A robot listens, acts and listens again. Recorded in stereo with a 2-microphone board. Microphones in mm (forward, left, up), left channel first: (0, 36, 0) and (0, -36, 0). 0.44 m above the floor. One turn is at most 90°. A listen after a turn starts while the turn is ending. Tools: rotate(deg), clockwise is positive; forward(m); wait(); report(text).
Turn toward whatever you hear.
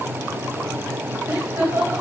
rotate(25)
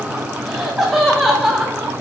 report("Facing the laughter, 1 to 2 m away.")